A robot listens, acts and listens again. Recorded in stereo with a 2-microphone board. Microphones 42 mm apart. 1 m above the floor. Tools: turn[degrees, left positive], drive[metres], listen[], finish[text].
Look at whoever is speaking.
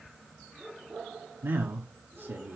Thought: The man speaking: about 55° right or 125° right.
Action: turn[-55]
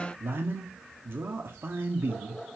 Thought: So it is at 60° right.
Action: turn[-60]
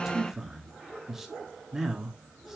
Action: finish[Facing the man speaking.]